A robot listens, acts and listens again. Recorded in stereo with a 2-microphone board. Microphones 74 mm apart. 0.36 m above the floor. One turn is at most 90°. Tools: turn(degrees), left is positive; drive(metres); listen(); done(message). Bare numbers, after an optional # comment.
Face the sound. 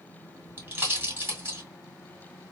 # The pop: about 30° right or 150° right.
turn(-30)
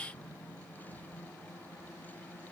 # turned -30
listen()
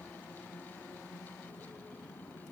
done("I heard a pop, but can't make it out now. It was about straight ahead or 120° right.")